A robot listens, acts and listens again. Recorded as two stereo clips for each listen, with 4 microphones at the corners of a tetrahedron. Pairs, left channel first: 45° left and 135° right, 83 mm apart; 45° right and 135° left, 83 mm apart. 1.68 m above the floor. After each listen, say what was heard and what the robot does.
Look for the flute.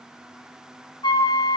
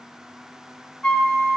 The flute: 35° left. Turn 35° left.
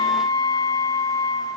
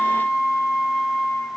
The flute is now 20° left. Turn 20° left.
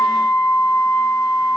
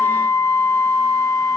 Found it: a flute, straight ahead.